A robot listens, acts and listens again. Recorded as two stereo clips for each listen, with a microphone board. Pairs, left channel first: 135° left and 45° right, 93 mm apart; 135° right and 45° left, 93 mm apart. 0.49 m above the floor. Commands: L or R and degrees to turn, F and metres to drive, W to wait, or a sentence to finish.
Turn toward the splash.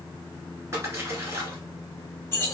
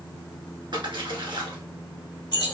L15
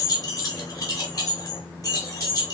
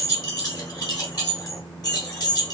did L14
Facing where the splash came from. I can't hear it now.